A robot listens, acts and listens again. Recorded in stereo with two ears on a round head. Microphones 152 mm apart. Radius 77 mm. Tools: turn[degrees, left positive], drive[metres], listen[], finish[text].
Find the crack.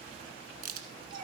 Thought: The crack: about 55° right or 125° right.
Action: turn[-55]
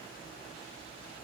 Action: listen[]
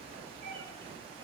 Action: finish[I heard a crack, but can't make it out now. It was about straight ahead or 70° right.]